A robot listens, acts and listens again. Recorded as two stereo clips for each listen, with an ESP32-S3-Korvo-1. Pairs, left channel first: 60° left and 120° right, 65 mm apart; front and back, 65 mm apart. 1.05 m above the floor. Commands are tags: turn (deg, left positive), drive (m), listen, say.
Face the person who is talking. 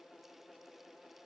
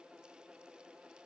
<listen/>
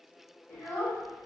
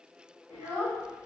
<turn deg="135"/>
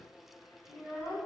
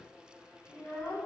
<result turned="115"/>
<turn deg="25"/>
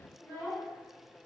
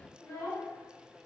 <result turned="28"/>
<say>Found it: a child speaking, straight ahead.</say>